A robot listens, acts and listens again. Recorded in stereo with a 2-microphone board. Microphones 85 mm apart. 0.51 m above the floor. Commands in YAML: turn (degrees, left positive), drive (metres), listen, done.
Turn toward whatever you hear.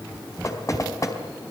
turn: 40
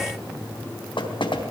turn: 100
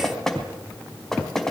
done: "Found it: knocking, straight ahead."